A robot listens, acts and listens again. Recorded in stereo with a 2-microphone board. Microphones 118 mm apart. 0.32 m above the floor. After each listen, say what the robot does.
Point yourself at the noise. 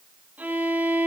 Turn 30° right.
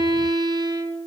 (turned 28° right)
Turn 140° right.
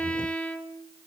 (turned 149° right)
Turn 10° left.
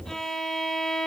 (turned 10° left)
Found it: a violin, straight ahead.